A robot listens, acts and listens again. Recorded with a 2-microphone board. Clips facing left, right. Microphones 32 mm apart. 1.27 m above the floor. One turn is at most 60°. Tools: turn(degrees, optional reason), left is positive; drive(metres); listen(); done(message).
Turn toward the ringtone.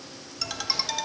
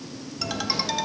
turn(degrees=-30)
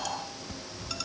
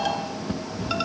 turn(degrees=-60, reason="So it is at 140° right.")
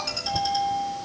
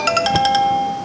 turn(degrees=-60, reason="The ringtone is now 80° right.")
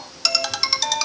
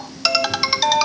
turn(degrees=-15, reason="The ringtone is now 15° right.")
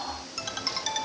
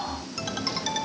done("Found it: a ringtone, straight ahead.")